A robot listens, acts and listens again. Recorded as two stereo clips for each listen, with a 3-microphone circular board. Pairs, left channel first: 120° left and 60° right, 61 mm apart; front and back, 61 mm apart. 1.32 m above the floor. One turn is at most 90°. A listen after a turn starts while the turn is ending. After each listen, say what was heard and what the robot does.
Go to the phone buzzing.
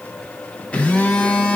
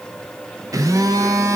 The phone buzzing: 170° right. Turn 90° right.
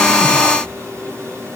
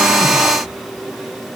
The phone buzzing is now 90° right. Turn 90° right.
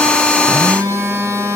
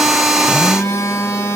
The phone buzzing is now 25° right. Turn 25° right.
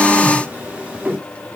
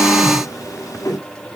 The phone buzzing is now 10° left. Turn 10° left.
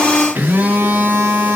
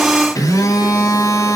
Drive 1.0 m forward.
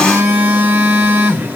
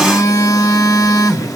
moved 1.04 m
Drive 1.0 m forward.
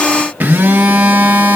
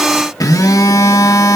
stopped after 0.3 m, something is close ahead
Arrived at the phone buzzing, straight ahead.